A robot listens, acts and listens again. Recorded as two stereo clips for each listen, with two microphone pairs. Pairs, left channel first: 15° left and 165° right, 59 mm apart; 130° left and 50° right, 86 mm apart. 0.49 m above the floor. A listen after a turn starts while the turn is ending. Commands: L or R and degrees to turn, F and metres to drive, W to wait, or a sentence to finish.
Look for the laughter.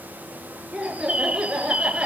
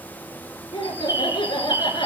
L120
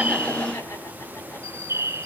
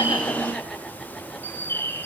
W
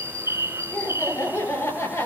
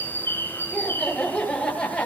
L50
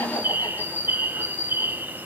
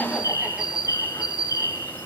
W
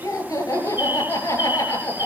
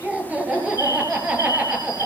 L20
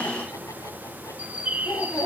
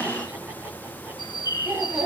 Found it: laughter, straight ahead.